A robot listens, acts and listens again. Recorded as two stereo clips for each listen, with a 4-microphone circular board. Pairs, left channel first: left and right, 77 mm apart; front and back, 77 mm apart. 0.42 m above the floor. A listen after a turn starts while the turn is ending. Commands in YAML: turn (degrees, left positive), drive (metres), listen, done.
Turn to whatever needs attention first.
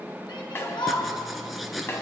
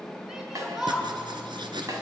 turn: 95
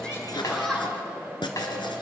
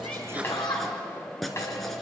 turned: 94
done: "Found it: a shout, straight ahead."